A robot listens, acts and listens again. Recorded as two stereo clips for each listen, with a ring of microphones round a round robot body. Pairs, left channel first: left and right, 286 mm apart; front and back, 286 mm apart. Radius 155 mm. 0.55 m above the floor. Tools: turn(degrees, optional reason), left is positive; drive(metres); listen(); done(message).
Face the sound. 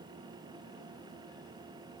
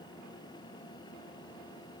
listen()
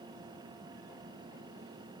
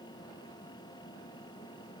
listen()
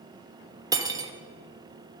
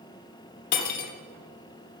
turn(degrees=-15, reason="The cutlery clinking: 15° right.")
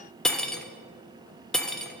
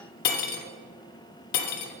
done("Found it: cutlery clinking, straight ahead.")